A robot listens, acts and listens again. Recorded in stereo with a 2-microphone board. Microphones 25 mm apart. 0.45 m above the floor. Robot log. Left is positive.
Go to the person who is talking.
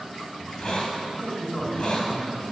note: The man speaking: about 70° left or 110° left.
cmd yaw +70
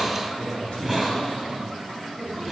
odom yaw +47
note: So it is at 55° left.
cmd yaw +55
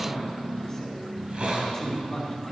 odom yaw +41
note: The man speaking is now 15° left.
cmd yaw +15
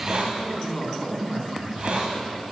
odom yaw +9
cmd fwd 1.0
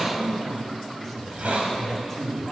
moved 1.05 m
cmd fwd 1.0
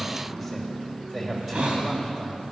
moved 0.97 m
cmd fwd 1.0
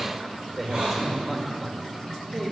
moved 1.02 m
note: The man speaking is now 10° right.
cmd yaw -10
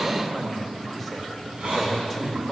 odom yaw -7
cmd fwd 1.0
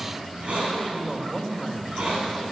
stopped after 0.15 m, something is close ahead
end: Arrived at the man speaking, straight ahead.